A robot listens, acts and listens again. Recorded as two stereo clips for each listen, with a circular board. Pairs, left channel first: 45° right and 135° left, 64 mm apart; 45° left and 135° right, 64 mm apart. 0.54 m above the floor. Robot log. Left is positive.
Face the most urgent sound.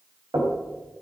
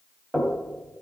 cmd idle
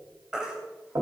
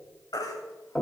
note: The baby crying: 55° left.
cmd yaw +55
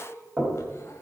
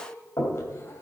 cmd idle
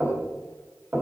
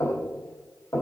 cmd idle
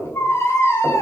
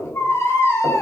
end: Found it: a baby crying, straight ahead, 2 to 4 m away.